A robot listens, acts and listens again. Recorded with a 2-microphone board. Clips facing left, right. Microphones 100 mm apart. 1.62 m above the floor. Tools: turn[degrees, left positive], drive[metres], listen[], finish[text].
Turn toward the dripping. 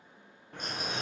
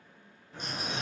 Thought: The dripping: about 65° left or 115° left.
Action: turn[65]
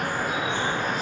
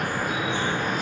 Thought: So it is at 35° left.
Action: turn[35]
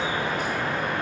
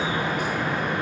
Thought: The dripping is now 15° right.
Action: turn[-15]
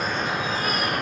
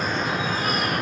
Action: finish[Found it: dripping, straight ahead.]